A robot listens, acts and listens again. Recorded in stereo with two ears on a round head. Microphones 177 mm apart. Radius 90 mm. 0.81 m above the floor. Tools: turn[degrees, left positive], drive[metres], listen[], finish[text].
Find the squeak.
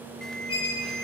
Thought: The squeak: about 30° left or 150° left.
Action: turn[30]
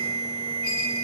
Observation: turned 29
Action: listen[]
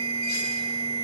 Action: listen[]
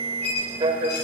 Thought: So it is at 120° left.
Action: turn[120]
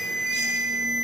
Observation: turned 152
Thought: Nothing new. It was at 35° right.
Action: turn[-35]
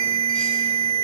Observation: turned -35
Action: listen[]
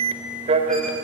Action: finish[Facing where the squeak came from. I can't hear it now.]